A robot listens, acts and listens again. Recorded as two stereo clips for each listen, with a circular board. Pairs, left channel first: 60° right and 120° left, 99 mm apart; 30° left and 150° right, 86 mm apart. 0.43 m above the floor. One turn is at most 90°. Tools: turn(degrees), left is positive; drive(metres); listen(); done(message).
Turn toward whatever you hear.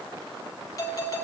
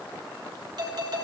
turn(degrees=-90)
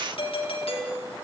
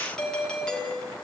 turn(degrees=-50)
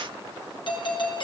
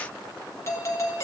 turn(degrees=-25)
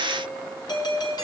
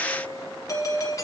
turn(degrees=-15)
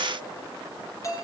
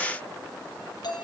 done("Found it: a doorbell, straight ahead, over 4 m away.")